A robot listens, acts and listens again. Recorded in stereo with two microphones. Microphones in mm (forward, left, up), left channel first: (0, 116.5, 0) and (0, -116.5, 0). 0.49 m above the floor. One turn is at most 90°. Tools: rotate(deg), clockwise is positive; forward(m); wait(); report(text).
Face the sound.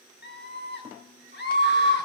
rotate(-45)
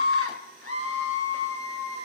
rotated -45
rotate(-85)
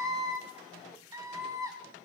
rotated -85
rotate(15)
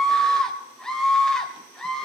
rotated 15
report("Found it: a scream, straight ahead.")